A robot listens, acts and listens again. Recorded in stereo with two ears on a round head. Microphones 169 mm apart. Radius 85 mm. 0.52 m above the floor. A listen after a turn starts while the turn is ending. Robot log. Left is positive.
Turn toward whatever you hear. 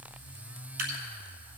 note: The dripping: about 50° right or 130° right.
cmd yaw -50
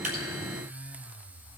cmd idle
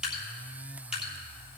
end: Found it: dripping, straight ahead, 2 to 4 m away.